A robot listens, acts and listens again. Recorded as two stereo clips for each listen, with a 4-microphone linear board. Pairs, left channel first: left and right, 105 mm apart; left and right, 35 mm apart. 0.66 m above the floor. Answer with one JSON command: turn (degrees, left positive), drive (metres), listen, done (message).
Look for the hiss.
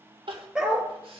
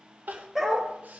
{"listen": true}
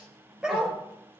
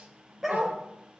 {"listen": true}
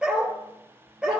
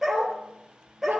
{"done": "I can't make out a hiss to turn to."}